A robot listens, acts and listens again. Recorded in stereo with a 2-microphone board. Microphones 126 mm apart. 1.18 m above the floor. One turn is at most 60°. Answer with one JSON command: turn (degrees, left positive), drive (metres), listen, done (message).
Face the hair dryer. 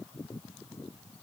{"listen": true}
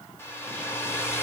{"turn": 20}
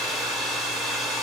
{"done": "Facing the hair dryer."}